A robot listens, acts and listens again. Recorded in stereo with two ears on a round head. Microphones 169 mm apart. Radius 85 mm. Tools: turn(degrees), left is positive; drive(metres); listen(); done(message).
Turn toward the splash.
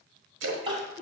turn(degrees=-75)
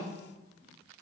listen()
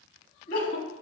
done("I heard a splash, but can't make it out now. It was about straight ahead or 30° right.")